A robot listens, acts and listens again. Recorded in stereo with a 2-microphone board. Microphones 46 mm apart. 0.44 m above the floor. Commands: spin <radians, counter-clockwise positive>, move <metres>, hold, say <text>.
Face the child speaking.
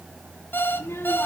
spin 1.05
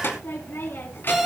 spin 0.87
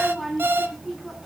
say Found it: a child speaking, straight ahead, 2 to 4 m away.